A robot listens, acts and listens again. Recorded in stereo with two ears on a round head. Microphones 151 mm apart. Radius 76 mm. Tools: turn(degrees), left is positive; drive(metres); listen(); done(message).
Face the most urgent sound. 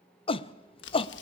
turn(degrees=35)
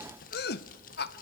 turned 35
turn(degrees=110)
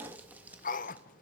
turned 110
turn(degrees=50)
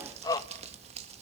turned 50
turn(degrees=20)
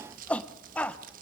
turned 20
turn(degrees=10)
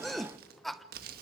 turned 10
done("Facing the shout, under 1 m away.")